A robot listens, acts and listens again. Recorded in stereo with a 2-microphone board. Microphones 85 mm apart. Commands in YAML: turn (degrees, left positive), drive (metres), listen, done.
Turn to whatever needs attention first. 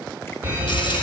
turn: -20
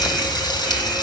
done: "Facing the fire alarm."